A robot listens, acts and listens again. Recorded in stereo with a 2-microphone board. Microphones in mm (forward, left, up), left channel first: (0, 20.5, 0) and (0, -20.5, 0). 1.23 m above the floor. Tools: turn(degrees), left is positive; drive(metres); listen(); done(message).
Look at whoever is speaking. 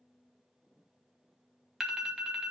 listen()
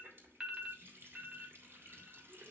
listen()
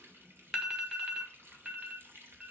done("I can't make out anyone speaking, only a running tap and an alarm.")